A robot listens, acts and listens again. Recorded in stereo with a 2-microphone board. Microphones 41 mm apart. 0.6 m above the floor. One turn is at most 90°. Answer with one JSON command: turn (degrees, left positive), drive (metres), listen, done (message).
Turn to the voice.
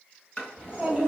{"turn": -30}
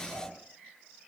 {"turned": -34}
{"turn": -90}
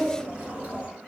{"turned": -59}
{"turn": -50}
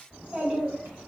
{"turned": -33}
{"turn": -20}
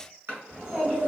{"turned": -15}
{"done": "Found it: a child speaking, straight ahead."}